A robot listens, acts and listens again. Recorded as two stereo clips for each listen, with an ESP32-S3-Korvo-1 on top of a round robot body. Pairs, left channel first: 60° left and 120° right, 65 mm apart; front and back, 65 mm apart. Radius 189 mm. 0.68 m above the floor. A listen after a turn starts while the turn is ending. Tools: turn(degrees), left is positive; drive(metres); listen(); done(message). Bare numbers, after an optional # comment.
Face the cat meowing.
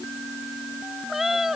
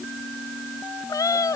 # The cat meowing: 35° right.
turn(-35)
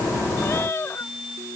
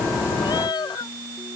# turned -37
done("Found it: a cat meowing, straight ahead.")